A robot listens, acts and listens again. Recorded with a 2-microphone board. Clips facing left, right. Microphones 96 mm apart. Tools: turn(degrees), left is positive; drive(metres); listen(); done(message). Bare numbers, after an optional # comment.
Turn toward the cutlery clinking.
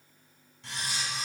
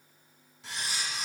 turn(-30)
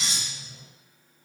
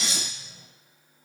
# So it is at 25° left.
turn(25)
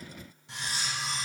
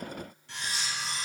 # The cutlery clinking is now 20° left.
turn(20)
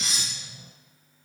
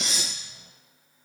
done("Found it: cutlery clinking, straight ahead, 1 to 2 m away.")